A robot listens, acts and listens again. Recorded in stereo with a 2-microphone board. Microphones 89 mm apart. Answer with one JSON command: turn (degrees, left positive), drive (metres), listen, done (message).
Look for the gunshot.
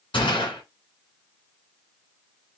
{"turn": 90}
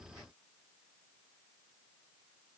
{"done": "I heard a gunshot from this way, but can't make it out now."}